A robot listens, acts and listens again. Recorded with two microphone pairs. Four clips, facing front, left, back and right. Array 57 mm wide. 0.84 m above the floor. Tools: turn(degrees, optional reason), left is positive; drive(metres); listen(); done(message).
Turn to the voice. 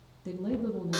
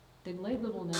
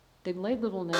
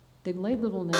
turn(degrees=-150, reason="The woman speaking: 150° right.")
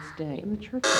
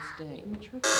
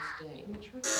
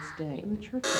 turn(degrees=-15, reason="The woman speaking is now 15° right.")
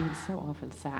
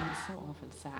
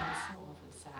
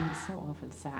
turn(degrees=-10, reason="The woman speaking is now 10° right.")
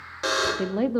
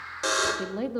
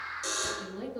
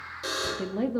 done("Found it: a woman speaking, straight ahead, 1 to 2 m away.")